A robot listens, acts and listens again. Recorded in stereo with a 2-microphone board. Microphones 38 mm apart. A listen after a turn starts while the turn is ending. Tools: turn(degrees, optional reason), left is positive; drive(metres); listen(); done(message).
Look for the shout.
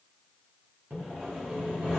listen()
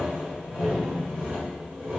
listen()
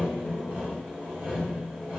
done("I can't make out a shout, only sawing.")